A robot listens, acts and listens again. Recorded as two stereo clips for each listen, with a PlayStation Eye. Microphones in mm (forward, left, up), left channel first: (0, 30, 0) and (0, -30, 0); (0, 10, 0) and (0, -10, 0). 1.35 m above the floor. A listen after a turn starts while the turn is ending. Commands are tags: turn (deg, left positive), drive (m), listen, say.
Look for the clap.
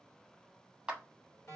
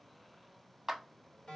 <turn deg="-30"/>
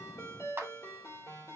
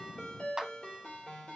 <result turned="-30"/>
<turn deg="-135"/>
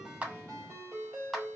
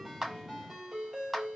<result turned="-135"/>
<say>Facing the clap, 1 to 2 m away.</say>